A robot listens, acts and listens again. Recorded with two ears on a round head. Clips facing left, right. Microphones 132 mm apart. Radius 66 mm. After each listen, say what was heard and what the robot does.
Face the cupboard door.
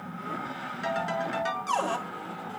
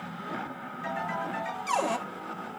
Turn 30° right.
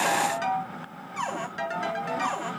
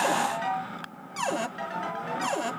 So it is at 135° right. Turn 135° right.
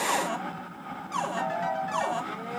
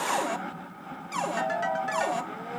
The cupboard door is now 15° right. Turn 15° right.
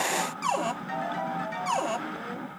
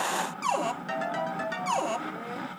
Found it: a cupboard door, straight ahead.